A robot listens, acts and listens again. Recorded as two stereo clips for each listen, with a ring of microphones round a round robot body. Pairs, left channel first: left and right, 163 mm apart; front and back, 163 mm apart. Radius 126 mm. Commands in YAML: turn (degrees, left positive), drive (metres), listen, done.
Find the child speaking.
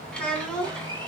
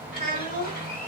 done: "Facing the child speaking."